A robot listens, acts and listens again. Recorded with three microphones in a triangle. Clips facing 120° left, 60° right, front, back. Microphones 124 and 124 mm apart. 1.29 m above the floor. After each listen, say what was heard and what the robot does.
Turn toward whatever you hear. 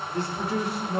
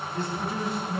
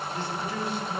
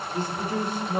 The man speaking: 135° left. Turn 135° left.
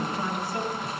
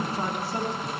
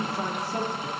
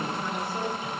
Facing the man speaking, 2 to 4 m away.